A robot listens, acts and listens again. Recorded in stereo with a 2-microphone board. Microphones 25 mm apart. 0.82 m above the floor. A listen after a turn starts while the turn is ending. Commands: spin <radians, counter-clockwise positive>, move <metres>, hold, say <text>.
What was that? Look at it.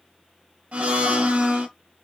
spin -0.87
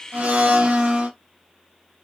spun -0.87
spin -1.22
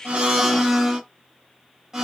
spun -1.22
spin -0.44
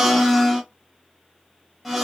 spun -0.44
say Found it: a blender, straight ahead, under 1 m away.